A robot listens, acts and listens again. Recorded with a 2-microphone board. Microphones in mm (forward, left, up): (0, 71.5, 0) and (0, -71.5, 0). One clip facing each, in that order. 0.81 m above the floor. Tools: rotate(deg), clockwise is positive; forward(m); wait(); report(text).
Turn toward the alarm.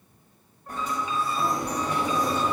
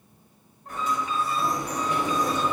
rotate(65)
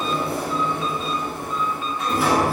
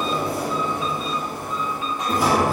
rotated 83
wait()
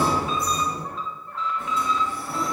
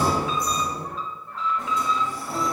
report("Found it: an alarm, straight ahead, 2 to 4 m away.")